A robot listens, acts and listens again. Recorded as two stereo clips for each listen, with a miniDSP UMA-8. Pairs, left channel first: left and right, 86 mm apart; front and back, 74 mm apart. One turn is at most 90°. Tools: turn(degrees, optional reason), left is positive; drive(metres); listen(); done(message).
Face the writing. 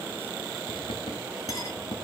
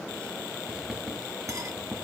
turn(degrees=90, reason="The writing: 100° left.")
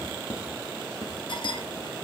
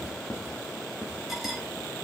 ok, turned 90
turn(degrees=55, reason="The writing is now 55° left.")
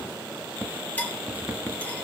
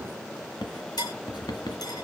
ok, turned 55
turn(degrees=-20, reason="The writing is now 20° right.")
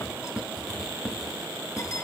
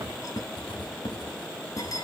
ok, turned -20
done("Found it: writing, straight ahead, 1 to 2 m away.")